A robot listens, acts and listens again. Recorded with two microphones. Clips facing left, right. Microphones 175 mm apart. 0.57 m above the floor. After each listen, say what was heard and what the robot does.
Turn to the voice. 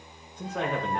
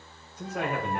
Turn 30° right.
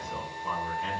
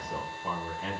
So it is at 140° right. Turn 140° right.
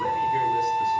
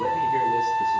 The man speaking is now 25° right. Turn 25° right.
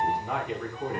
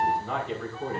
The man speaking is now 10° left. Turn 10° left.
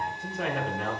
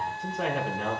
Found it: a man speaking, straight ahead.